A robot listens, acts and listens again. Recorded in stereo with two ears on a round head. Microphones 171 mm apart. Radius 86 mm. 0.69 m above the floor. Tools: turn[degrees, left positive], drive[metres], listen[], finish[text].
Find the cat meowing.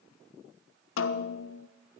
Action: listen[]
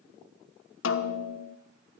Action: listen[]
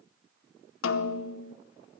Action: finish[I can't make out a cat meowing to turn to.]